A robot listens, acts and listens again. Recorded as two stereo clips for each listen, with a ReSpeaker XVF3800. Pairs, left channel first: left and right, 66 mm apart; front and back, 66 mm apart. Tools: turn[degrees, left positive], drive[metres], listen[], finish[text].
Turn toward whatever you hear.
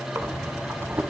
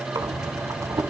Thought: The breathing: 140° right.
Action: turn[-140]
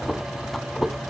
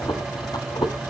Action: finish[Facing the breathing.]